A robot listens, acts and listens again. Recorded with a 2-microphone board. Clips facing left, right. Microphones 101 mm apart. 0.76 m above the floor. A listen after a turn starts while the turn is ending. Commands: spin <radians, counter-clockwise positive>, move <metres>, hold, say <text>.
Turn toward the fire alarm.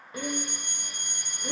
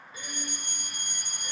spin -0.96
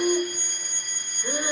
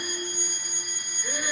spin -0.26
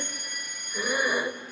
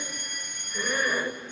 say Facing the fire alarm, 2 to 4 m away.